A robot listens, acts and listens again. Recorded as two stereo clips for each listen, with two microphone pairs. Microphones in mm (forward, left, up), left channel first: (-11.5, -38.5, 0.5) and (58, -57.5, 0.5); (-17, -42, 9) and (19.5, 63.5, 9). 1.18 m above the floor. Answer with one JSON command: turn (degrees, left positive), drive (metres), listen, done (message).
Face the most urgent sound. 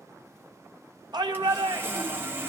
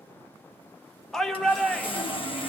{"turn": -25}
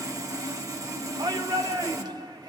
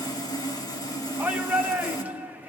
{"done": "Facing the shout, 1 to 2 m away."}